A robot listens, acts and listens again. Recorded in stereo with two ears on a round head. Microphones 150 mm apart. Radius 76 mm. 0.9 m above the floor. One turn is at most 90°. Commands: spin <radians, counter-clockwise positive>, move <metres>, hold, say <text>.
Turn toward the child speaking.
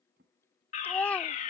spin 0.52
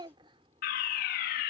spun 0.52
spin -0.52
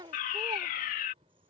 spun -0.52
spin -0.44
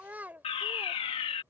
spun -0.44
spin -0.17
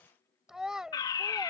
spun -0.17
say Facing the child speaking.